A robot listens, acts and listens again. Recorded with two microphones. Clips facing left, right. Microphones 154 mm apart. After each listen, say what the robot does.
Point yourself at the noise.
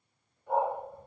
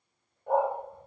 Turn 55° right.
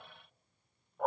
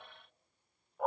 Found it: a dog barking, straight ahead, 1 to 2 m away.